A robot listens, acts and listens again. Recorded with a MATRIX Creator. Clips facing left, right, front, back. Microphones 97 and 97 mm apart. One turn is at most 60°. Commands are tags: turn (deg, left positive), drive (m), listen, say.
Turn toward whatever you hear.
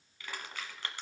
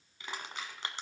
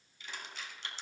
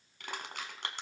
<turn deg="-60"/>
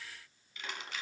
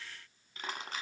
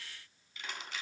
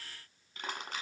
<turn deg="-60"/>
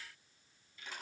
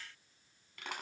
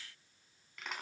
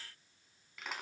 <turn deg="-60"/>
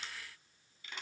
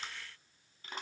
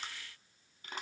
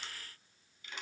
<turn deg="-45"/>
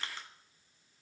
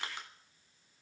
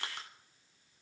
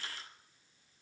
<turn deg="-15"/>
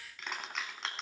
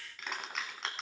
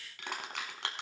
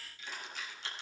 <say>Facing the crushing, 2 to 4 m away.</say>